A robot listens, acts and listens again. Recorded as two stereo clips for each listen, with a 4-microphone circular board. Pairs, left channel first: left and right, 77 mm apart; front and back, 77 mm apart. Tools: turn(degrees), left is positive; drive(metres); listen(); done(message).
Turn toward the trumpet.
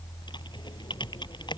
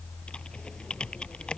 listen()
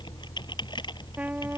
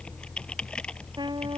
turn(degrees=-160)
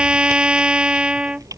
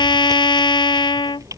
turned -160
turn(degrees=-15)
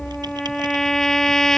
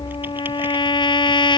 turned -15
done("Facing the trumpet.")